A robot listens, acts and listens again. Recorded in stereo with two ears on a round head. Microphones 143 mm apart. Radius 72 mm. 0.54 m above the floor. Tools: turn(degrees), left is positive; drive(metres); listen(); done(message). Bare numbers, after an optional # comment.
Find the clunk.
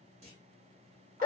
# The clunk: about 45° right or 135° right.
turn(-45)
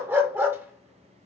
listen()
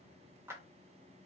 done("I heard a clunk, but can't make it out now. It was about straight ahead or 90° right.")